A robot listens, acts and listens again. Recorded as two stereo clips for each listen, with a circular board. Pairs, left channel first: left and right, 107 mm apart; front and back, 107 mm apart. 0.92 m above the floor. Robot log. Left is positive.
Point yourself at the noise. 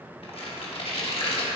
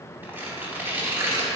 note: The tearing paper: 110° left.
cmd yaw +110
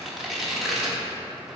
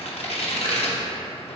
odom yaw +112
end: Found it: tearing paper, straight ahead, 1 to 2 m away.